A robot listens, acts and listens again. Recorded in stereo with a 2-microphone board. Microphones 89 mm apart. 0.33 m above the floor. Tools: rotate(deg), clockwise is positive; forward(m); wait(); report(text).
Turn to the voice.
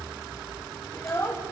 rotate(-30)
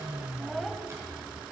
report("Facing the child speaking, under 1 m away.")